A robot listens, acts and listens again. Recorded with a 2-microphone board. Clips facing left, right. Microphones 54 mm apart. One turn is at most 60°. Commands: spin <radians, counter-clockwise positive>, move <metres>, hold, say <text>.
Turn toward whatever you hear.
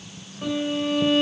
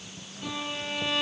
spin 0.70
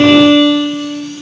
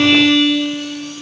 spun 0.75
say Facing the violin, 1 to 2 m away.